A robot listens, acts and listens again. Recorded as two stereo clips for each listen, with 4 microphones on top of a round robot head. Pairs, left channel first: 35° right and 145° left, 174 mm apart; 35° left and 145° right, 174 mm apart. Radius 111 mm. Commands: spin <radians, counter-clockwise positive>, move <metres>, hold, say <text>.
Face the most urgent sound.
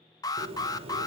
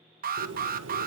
spin -1.83
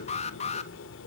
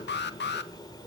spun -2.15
spin 0.26
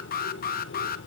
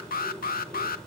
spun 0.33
say Facing the alarm.